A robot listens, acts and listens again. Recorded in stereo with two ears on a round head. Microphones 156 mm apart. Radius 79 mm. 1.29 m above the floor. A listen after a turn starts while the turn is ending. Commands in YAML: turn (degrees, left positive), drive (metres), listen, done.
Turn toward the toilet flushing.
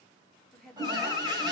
turn: -25
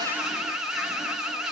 listen: true
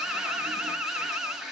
done: "Found it: a toilet flushing, straight ahead, 1 to 2 m away."